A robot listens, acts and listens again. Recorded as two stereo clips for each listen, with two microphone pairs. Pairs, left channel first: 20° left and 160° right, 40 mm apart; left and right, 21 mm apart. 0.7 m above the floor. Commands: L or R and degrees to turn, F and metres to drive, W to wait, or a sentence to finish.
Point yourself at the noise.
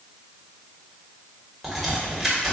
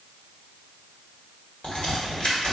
L115
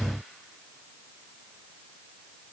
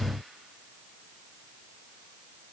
Facing where the crack came from. I can't hear it now.